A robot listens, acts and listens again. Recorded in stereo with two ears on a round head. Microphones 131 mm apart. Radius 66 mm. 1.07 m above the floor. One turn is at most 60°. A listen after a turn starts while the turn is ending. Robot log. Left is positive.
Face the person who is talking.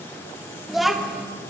cmd yaw +30
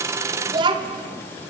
note: So it is at 30° right.
cmd yaw -30
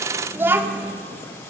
note: The child speaking is now 15° right.
cmd yaw -15
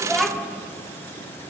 end: Found it: a child speaking, straight ahead, 2 to 4 m away.